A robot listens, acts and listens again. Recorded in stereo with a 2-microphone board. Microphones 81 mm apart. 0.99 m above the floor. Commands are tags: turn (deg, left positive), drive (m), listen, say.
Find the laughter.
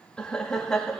<turn deg="30"/>
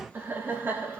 <turn deg="-30"/>
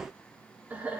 <turn deg="-20"/>
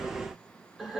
<say>Facing the laughter, 2 to 4 m away.</say>